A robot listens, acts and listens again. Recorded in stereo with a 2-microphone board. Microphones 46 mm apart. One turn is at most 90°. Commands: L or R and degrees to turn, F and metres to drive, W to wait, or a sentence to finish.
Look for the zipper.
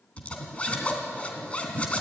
L25
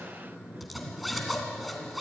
Found it: a zipper, straight ahead, 2 to 4 m away.